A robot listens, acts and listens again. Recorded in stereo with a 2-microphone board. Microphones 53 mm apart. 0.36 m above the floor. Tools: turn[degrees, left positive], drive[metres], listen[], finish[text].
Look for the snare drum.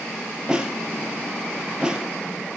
Thought: The snare drum: about 15° right or 165° right.
Action: turn[-15]
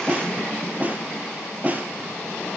Thought: So it is at 150° right.
Action: turn[-150]
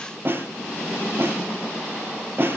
Thought: The snare drum is now 45° right.
Action: turn[-45]
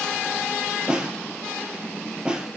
Thought: The snare drum is now 15° right.
Action: turn[-15]
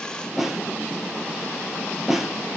Action: finish[Found it: a snare drum, straight ahead.]